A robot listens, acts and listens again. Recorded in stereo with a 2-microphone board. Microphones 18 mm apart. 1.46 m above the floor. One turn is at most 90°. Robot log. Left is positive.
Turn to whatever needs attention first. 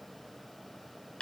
cmd idle
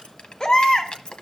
note: The baby crying: about 45° left or 135° left.
cmd yaw +45
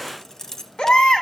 note: So it is at 85° left.
cmd yaw +85
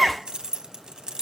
end: Found it: a baby crying, straight ahead, 1 to 2 m away.